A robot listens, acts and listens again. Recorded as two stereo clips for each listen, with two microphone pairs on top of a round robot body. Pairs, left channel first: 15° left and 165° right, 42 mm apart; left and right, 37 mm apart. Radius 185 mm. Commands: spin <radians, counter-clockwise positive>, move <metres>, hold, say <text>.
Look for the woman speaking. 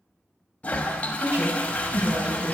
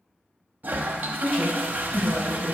spin -2.27
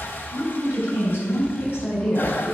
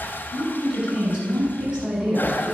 spin -0.44
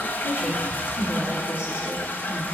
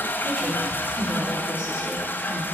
spin -0.26
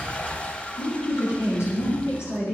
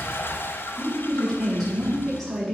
say Facing the woman speaking, over 4 m away.